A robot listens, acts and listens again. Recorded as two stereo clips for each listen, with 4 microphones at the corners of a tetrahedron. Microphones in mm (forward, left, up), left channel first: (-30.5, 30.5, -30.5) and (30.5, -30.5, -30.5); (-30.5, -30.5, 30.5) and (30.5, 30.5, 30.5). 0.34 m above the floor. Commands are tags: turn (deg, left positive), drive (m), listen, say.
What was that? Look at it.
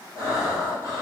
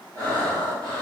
<turn deg="80"/>
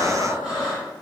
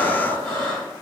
<turn deg="35"/>
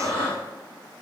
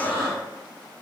<turn deg="-15"/>
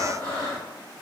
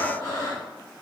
<say>Facing the breathing, 1 to 2 m away.</say>